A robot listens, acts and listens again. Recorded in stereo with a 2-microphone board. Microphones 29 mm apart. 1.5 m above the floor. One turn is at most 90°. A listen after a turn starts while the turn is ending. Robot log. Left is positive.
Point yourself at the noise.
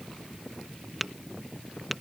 cmd yaw -30
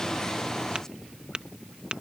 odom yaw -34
note: So it is at 140° right.
cmd yaw -90
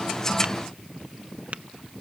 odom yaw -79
note: Nothing new. It was at 65° right.
cmd yaw -65
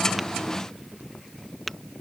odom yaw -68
end: Found it: tapping, straight ahead.